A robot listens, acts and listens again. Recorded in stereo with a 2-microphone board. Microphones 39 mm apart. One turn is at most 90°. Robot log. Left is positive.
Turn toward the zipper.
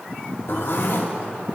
note: The zipper: about 60° left or 120° left.
cmd yaw +60
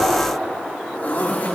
note: So it is at 50° left.
cmd yaw +50
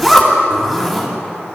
end: Facing the zipper.